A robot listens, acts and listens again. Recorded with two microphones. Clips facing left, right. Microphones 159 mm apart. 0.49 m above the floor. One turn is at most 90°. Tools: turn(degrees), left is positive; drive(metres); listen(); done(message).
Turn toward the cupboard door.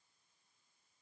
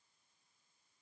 listen()
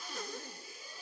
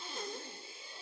listen()
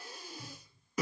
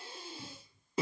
turn(degrees=-60)
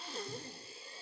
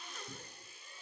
listen()
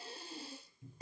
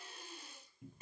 turn(degrees=-60)
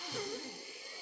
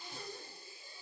listen()
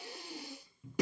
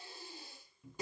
done("Facing the cupboard door.")